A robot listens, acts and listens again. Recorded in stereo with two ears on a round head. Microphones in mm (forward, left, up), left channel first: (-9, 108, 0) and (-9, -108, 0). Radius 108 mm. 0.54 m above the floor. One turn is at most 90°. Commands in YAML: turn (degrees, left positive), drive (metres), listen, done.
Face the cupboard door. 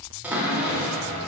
turn: -30
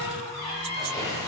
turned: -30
turn: 25
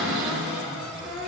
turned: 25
done: "Facing the cupboard door, 1 to 2 m away."